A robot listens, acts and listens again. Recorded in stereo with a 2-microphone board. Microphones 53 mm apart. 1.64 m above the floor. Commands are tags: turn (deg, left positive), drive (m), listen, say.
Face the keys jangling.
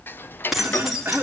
<turn deg="-30"/>
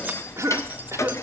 <listen/>
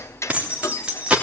<turn deg="-160"/>
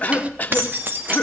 <turn deg="-45"/>
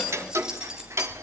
<listen/>
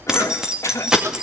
<turn deg="-15"/>
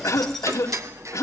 <listen/>
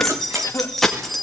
<say>Found it: keys jangling, straight ahead, 2 to 4 m away.</say>